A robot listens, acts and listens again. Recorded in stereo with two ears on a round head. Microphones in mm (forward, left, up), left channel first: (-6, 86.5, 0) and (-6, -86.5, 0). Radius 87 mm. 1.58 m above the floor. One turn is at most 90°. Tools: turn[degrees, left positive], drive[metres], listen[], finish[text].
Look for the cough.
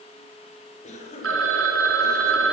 Thought: The cough: about 40° left or 140° left.
Action: turn[40]
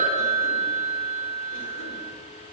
Action: listen[]
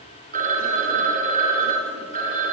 Action: listen[]
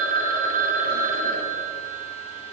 Action: finish[I heard a cough, but can't make it out now. It was about straight ahead or 100° left.]